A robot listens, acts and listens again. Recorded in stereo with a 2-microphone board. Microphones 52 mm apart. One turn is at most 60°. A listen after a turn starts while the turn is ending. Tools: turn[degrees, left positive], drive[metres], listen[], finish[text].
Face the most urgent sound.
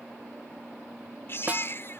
Thought: The baby crying: about 50° left or 130° left.
Action: turn[50]
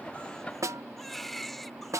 Action: finish[Found it: a baby crying, straight ahead.]